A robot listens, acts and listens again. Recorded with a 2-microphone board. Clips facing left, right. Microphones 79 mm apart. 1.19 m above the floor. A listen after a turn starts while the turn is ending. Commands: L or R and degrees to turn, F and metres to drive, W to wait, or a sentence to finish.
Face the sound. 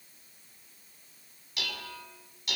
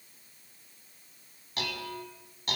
R40
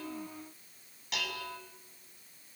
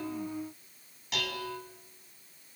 Facing the dishes clattering, over 4 m away.